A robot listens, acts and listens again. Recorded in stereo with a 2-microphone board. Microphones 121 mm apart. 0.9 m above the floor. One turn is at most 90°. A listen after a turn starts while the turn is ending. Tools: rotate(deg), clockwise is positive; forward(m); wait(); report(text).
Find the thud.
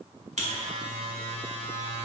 wait()
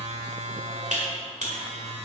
wait()
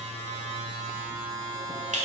report("I can't make out a thud, only a buzzer.")